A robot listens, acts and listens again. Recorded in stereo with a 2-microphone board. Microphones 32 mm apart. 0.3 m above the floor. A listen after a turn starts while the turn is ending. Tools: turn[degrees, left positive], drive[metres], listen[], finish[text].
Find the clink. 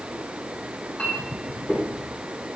Thought: The clink: about 35° left or 145° left.
Action: turn[35]
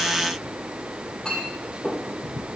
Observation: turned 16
Thought: So it is at 20° left.
Action: turn[20]
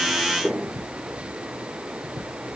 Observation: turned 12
Thought: The clink is now 10° left.
Action: turn[10]
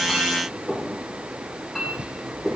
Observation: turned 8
Action: finish[Facing the clink, over 4 m away.]